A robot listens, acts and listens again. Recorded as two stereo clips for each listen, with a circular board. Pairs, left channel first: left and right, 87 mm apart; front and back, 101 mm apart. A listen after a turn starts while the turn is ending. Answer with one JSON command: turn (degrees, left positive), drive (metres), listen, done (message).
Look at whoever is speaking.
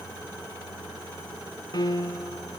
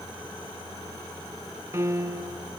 {"listen": true}
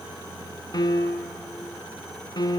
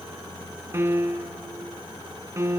{"listen": true}
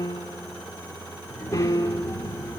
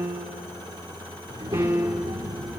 {"turn": 145}
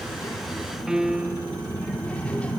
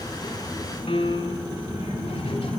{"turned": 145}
{"turn": 15}
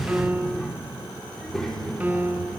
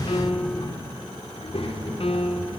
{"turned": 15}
{"done": "Found it: a child speaking, straight ahead, 2 to 4 m away."}